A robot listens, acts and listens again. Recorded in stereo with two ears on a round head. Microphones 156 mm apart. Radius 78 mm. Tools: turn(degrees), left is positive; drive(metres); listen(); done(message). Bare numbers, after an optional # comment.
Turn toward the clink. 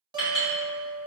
# The clink: about 45° left or 135° left.
turn(45)
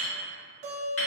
# So it is at 90° left.
turn(90)
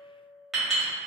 done("Facing the clink.")